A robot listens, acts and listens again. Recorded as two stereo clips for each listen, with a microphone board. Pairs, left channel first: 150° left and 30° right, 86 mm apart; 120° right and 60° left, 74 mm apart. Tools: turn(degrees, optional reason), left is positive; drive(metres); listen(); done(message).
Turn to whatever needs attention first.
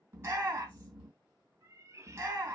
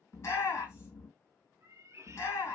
turn(degrees=-85, reason="The shout: 85° right.")
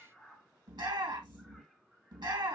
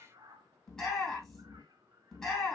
turn(degrees=-40, reason="The shout is now 40° right.")
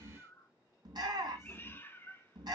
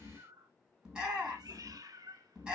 turn(degrees=-15, reason="The shout is now 15° right.")
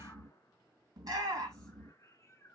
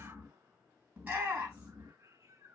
done("Found it: a shout, straight ahead.")